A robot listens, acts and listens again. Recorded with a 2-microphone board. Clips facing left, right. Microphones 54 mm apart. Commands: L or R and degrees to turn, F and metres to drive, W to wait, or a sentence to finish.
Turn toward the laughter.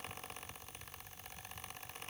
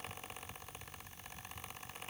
W
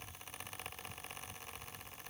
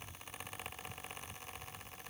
W
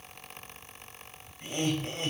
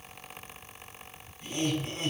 L45
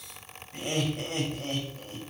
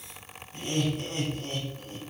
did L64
L70
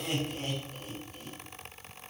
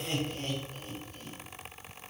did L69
Found it: laughter, straight ahead.